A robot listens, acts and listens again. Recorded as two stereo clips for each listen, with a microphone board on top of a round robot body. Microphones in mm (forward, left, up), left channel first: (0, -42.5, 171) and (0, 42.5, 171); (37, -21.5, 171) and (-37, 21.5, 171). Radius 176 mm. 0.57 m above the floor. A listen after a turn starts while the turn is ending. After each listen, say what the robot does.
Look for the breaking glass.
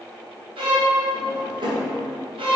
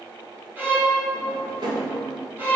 Keep listening.
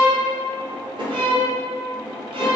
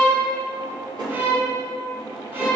Keep listening.
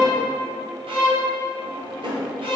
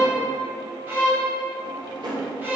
I can't make out breaking glass to turn to.